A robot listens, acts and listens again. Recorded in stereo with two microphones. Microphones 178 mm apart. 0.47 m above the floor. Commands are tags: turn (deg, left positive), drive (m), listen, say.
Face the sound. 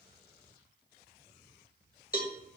<turn deg="55"/>
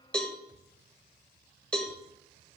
<say>Found it: a cowbell, straight ahead, under 1 m away.</say>